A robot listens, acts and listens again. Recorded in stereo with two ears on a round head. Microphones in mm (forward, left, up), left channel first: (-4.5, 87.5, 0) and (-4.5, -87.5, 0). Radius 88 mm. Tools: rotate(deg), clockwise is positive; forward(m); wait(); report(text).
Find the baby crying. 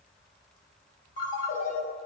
wait()
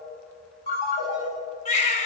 rotate(-35)
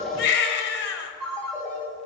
rotate(-105)
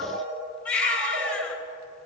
rotate(-10)
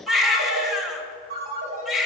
report("Facing the baby crying.")